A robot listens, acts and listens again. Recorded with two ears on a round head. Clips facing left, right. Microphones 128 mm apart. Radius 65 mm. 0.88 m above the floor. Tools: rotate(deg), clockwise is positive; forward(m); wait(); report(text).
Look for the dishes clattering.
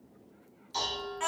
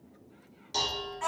rotate(60)
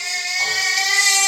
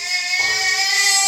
wait()
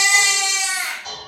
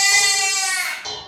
rotate(60)
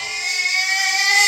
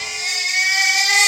wait()
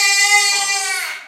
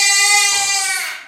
wait()
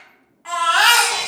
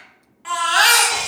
report("Facing where the dishes clattering came from. I can't hear it now.")